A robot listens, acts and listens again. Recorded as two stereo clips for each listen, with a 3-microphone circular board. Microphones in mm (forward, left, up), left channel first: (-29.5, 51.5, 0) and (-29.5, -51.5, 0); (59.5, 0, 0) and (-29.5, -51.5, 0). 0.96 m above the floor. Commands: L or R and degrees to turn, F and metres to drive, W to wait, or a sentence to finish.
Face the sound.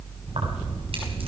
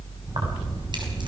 R110
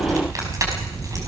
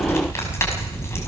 R35
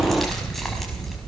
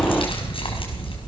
Facing the keys jangling.